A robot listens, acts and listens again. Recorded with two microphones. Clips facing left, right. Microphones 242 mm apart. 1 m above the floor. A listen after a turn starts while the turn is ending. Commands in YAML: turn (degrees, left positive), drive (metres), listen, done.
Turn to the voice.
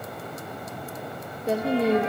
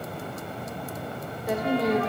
turn: 25
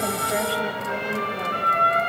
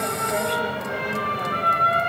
listen: true
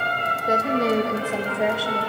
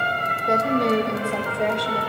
done: "Found it: a woman speaking, straight ahead."